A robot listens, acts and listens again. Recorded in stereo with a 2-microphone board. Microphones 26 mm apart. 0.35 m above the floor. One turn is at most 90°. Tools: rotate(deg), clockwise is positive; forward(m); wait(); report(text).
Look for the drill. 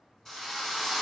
rotate(-25)
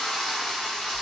rotate(-90)
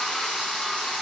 rotate(-55)
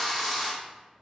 report("Facing the drill, 1 to 2 m away.")